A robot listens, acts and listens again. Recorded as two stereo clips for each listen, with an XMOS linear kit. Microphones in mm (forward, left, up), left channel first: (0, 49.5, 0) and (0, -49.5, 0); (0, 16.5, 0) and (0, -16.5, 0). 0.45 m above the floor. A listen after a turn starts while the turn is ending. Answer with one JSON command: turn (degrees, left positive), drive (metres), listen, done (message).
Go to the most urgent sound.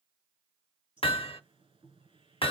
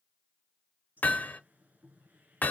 {"listen": true}
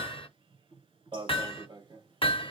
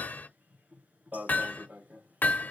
{"turn": -60}
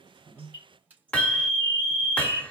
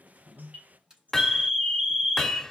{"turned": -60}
{"turn": -20}
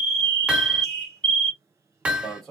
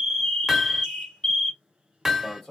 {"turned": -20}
{"drive": 1.0}
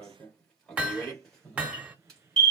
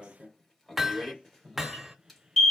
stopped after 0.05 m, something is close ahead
{"done": "Blocked. The alarm is further on, straight ahead."}